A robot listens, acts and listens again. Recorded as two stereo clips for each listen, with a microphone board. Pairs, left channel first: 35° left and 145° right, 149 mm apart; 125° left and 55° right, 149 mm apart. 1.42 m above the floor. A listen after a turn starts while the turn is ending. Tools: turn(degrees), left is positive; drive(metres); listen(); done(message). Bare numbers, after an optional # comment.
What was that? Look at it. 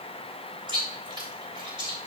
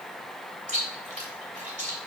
# The chewing: 90° right.
turn(-90)
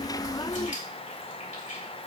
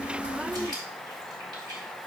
listen()
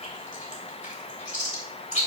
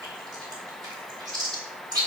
done("Facing the chewing.")